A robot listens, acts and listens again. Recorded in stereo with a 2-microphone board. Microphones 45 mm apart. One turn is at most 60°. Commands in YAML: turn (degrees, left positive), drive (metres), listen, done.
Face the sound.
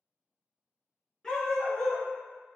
turn: 30
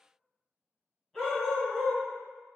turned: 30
turn: 30
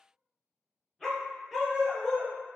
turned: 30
turn: 30
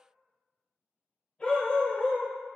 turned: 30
turn: 60
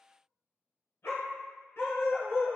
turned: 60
turn: 60
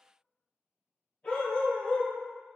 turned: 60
turn: 25
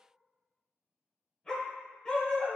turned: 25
turn: 10
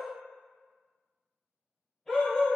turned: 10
done: "Found it: a dog barking, straight ahead."